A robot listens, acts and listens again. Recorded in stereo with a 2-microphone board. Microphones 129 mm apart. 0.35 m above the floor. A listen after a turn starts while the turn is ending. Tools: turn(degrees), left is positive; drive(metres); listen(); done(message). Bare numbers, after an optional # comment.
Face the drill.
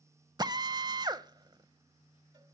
# The drill: about 30° right or 150° right.
turn(-30)
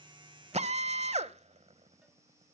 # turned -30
# So it is at 115° right.
turn(-115)
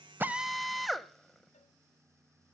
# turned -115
done("Facing the drill.")